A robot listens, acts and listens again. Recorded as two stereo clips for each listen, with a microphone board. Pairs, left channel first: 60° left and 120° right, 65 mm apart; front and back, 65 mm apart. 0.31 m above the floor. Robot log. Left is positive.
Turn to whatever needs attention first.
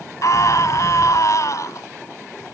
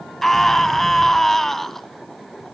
note: The scream: 85° left.
cmd yaw +85
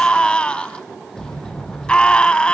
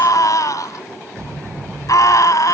note: The scream is now 10° right.
cmd yaw -10
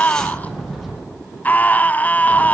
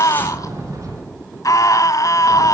end: Found it: a scream, straight ahead, 1 to 2 m away.